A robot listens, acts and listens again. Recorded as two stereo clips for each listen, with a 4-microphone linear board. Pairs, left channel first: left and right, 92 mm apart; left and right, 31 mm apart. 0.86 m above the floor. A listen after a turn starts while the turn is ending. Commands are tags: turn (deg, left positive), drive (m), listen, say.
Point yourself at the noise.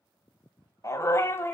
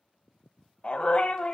<turn deg="25"/>
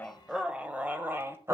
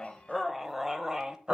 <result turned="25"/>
<turn deg="-30"/>
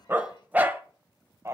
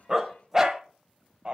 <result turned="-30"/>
<turn deg="-35"/>
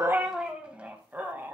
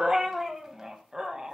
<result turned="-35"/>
<turn deg="-20"/>
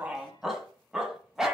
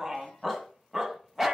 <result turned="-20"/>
<say>Facing the dog barking.</say>